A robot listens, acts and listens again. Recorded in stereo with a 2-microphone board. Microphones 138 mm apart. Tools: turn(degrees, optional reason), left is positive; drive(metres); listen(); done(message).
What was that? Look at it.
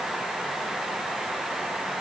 listen()
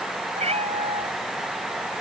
turn(degrees=-50, reason="The cat meowing: about 50° right or 130° right.")
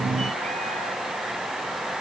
listen()
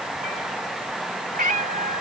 turn(degrees=-80, reason="So it is at 80° right.")
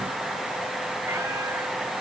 listen()
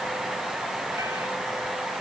listen()
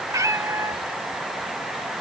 turn(degrees=-25, reason="The cat meowing is now 25° right.")
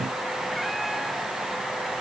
listen()
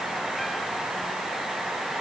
listen()
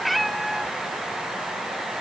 done("Found it: a cat meowing, straight ahead.")